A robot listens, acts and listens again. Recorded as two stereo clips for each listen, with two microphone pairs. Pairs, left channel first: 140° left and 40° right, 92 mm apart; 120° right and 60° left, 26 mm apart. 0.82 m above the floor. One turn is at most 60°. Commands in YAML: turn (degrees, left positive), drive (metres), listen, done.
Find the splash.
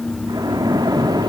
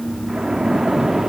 done: "Facing the splash."